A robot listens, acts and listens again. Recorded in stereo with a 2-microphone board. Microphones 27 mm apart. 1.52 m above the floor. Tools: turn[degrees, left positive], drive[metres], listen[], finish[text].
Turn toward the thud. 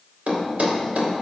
Thought: The thud: about 70° right or 110° right.
Action: turn[-70]
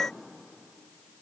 Action: listen[]
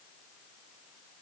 Action: finish[I heard a thud, but can't make it out now. It was about straight ahead or 40° right.]